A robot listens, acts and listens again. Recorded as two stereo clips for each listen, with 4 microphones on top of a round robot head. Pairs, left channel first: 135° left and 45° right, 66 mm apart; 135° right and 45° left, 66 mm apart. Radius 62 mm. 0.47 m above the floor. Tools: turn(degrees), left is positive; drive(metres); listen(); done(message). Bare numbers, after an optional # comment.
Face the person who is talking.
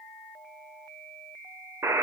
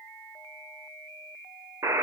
listen()
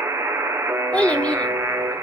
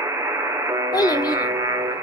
# The child speaking: 155° right.
turn(-155)
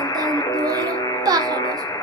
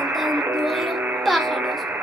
# The child speaking is now 45° right.
turn(-45)
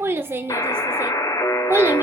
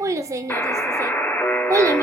done("Found it: a child speaking, straight ahead.")